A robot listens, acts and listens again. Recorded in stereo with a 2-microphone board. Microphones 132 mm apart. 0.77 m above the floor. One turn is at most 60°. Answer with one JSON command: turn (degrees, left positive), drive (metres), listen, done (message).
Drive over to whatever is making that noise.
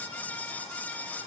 {"listen": true}
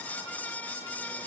{"listen": true}
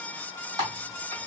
{"turn": -30}
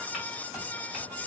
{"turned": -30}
{"listen": true}
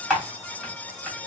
{"drive": 1.0}
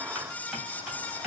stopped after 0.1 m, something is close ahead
{"done": "Blocked. The typing on a keyboard is further on, straight ahead."}